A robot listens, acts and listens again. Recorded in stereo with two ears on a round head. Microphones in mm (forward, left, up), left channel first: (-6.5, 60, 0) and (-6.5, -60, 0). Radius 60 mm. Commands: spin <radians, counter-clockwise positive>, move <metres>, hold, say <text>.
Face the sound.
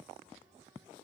hold
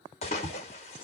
spin 0.87
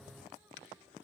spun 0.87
hold
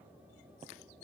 say I heard a splash, but can't make it out now. It was about straight ahead or 80° left.